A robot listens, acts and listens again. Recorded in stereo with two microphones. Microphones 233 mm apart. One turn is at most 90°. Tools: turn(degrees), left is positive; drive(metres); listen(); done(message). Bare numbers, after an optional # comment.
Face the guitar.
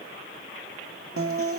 # The guitar: about 70° right or 110° right.
turn(-70)
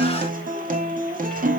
# So it is at 35° right.
turn(-35)
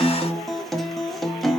done("Found it: a guitar, straight ahead.")